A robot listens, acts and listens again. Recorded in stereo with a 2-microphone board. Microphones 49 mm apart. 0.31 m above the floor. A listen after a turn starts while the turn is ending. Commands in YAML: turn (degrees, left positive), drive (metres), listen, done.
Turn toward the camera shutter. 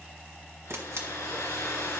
turn: -60
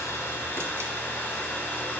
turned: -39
listen: true
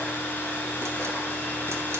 listen: true
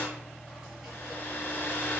done: "I heard a camera shutter, but can't make it out now. It was about 20° right or 85° right."